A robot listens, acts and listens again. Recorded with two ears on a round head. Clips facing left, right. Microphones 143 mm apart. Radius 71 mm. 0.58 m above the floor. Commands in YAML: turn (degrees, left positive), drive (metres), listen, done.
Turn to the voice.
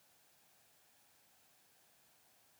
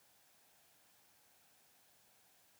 listen: true
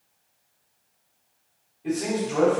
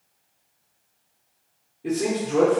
turn: -50
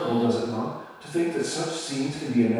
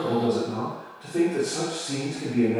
turn: -10
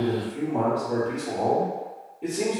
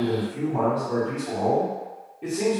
done: "Facing the man speaking."